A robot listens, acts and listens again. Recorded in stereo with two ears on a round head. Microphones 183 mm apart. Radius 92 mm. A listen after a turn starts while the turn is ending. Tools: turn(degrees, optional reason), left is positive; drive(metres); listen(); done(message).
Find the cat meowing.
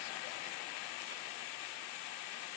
listen()
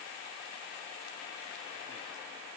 listen()
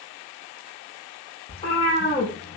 turn(degrees=30, reason="The cat meowing: about 30° left or 150° left.")
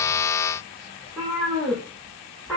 done("Facing the cat meowing, over 4 m away.")